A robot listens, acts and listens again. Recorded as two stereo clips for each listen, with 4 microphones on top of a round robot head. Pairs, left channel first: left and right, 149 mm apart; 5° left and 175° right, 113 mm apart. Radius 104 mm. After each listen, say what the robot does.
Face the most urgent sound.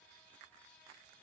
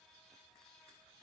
Keep listening.
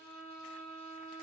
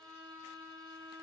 Keep listening.
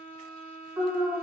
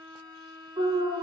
Turn 165° right.
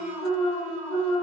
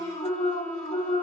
Facing the alarm.